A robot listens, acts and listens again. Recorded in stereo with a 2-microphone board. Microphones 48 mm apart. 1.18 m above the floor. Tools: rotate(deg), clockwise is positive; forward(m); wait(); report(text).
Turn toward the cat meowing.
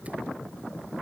wait()
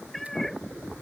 rotate(-30)
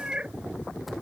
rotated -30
rotate(20)
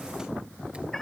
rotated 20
report("Found it: a cat meowing, straight ahead.")